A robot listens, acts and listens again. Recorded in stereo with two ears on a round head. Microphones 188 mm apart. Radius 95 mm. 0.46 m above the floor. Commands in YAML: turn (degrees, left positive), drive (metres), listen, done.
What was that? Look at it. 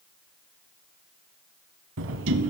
turn: -65
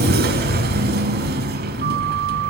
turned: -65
turn: -45
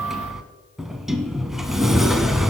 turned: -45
done: "Facing the sliding door, under 1 m away."